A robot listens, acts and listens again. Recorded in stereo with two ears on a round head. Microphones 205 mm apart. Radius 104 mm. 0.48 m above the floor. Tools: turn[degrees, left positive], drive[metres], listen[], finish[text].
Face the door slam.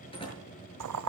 Thought: The door slam: about 25° left or 155° left.
Action: turn[25]
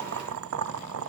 Action: listen[]
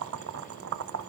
Action: finish[I heard a door slam, but can't make it out now. It was about straight ahead or 130° left.]